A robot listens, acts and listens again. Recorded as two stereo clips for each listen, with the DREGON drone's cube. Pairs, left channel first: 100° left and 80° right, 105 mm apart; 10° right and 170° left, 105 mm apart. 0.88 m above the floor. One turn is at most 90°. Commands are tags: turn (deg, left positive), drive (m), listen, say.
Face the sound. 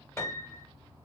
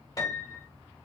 <turn deg="40"/>
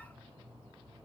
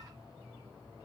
<listen/>
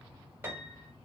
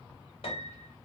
<turn deg="-10"/>
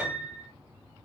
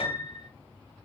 <say>Found it: a piano, straight ahead.</say>